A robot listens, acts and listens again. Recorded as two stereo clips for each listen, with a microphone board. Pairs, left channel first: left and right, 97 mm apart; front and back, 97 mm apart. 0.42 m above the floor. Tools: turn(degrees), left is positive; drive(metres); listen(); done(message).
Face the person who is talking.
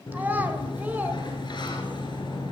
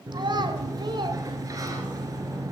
turn(degrees=-160)
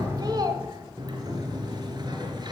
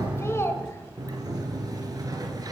turn(degrees=-55)
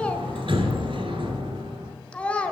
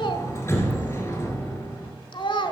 turn(degrees=15)
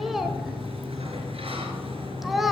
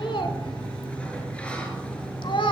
done("Found it: a child speaking, straight ahead, 1 to 2 m away.")